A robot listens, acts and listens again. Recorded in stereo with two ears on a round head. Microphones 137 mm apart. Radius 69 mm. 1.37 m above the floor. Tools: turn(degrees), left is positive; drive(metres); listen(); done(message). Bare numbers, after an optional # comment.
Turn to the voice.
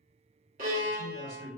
# The man speaking: about 70° right or 110° right.
turn(-70)
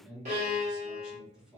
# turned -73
done("Found it: a man speaking, straight ahead, 1 to 2 m away.")